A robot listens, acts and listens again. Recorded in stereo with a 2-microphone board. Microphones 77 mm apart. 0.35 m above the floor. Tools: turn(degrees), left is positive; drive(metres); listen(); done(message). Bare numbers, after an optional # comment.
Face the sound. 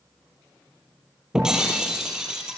turn(-30)
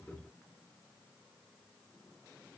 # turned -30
listen()
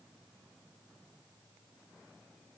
done("I heard breaking glass, but can't make it out now. It was about 25° left or 145° right.")